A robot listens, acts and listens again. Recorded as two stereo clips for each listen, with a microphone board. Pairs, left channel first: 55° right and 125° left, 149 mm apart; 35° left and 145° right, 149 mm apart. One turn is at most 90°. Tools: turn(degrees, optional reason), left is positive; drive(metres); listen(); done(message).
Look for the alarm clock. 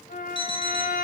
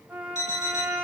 turn(degrees=-90, reason="The alarm clock: 115° right.")
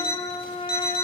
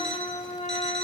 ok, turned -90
turn(degrees=-50, reason="The alarm clock is now 50° right.")
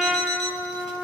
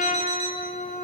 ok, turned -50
listen()
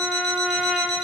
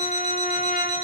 turn(degrees=-10, reason="The alarm clock is now 10° right.")
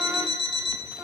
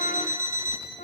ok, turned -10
done("Found it: an alarm clock, straight ahead, 2 to 4 m away.")